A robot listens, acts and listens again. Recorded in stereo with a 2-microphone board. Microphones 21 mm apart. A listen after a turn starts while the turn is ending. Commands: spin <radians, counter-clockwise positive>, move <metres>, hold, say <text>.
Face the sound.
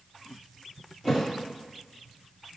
spin 0.52
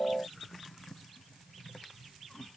hold
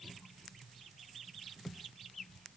say I heard a thud, but can't make it out now. It was about 15° right or 135° left.